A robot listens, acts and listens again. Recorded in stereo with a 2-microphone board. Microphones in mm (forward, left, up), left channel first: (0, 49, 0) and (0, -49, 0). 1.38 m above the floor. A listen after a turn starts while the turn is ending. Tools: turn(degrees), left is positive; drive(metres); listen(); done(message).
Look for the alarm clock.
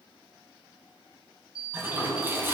turn(degrees=-55)
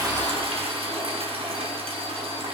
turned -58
listen()
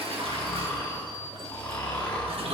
turn(degrees=-55)
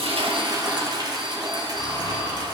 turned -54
listen()
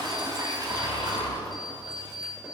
done("Found it: an alarm clock, straight ahead.")